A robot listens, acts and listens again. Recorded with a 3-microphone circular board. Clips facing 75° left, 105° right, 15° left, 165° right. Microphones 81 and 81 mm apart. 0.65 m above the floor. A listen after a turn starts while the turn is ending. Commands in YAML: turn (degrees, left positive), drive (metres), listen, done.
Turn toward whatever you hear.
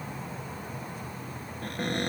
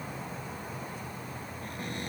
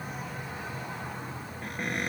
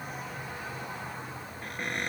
turn: 105
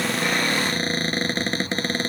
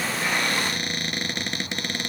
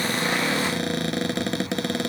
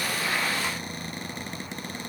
turn: 20
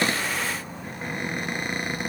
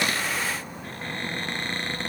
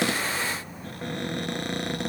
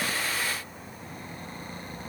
done: "Found it: a cupboard door, straight ahead."